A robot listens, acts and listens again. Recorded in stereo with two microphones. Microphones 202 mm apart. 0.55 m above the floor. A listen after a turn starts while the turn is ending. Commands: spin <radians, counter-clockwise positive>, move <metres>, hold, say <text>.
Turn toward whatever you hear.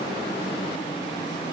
hold
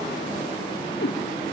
spin 0.96
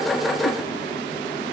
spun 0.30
hold
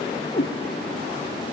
spin 0.70
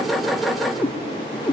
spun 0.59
say Found it: a cat meowing, straight ahead, 2 to 4 m away.